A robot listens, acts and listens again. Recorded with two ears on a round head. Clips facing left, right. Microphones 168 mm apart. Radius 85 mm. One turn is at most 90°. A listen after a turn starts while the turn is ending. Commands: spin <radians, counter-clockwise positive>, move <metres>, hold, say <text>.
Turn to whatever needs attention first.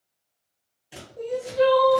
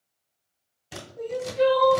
spin 0.61
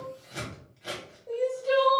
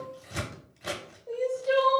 say Facing the crying, under 1 m away.